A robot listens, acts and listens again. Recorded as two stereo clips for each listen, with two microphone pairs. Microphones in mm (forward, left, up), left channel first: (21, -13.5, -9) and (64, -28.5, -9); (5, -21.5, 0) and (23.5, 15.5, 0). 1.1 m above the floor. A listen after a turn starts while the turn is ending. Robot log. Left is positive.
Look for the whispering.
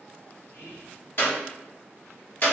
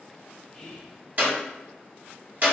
note: The whispering: 170° left.
cmd yaw +170
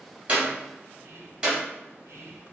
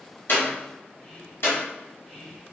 note: The whispering is now 35° right.
cmd yaw -35
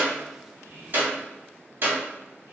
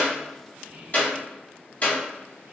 end: Facing the whispering.